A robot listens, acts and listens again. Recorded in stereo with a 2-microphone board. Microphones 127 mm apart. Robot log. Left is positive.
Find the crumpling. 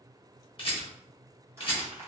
note: The crumpling: about 20° right or 160° right.
cmd yaw -20
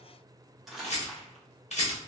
end: Facing the crumpling, under 1 m away.